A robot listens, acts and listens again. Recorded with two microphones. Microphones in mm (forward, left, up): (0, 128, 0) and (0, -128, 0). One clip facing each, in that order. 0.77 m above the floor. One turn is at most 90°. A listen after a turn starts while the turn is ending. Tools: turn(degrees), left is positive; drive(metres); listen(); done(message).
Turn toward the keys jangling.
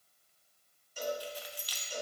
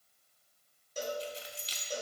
turn(degrees=-25)
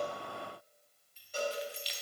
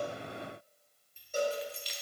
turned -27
turn(degrees=-90)
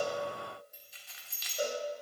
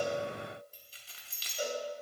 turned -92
turn(degrees=-35)
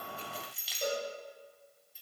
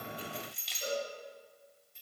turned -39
done("Facing the keys jangling, under 1 m away.")